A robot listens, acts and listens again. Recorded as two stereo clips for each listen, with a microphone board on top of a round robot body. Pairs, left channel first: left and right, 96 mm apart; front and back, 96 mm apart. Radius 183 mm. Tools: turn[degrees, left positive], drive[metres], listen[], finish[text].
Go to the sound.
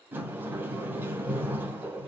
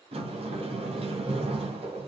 Thought: The sliding door: 160° right.
Action: turn[-160]
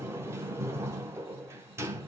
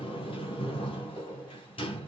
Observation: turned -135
Thought: The sliding door is now 30° right.
Action: turn[-30]
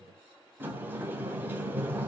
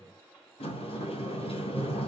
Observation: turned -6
Thought: The sliding door is now 20° right.
Action: turn[-20]
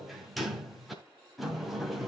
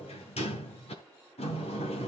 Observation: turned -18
Action: drive[1.0]
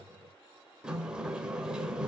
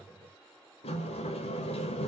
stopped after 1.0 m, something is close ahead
Thought: The sliding door is now 10° right.
Action: turn[-10]
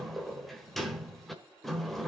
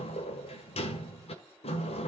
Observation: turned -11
Action: finish[Arrived at the sliding door, straight ahead.]